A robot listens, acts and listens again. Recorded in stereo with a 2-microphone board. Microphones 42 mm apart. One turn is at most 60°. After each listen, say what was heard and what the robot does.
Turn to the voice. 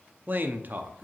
The man speaking: about 45° right or 135° right. Turn 45° right.
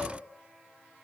Keep listening.
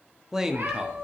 So it is at 15° right. Turn 15° right.
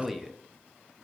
Found it: a man speaking, straight ahead.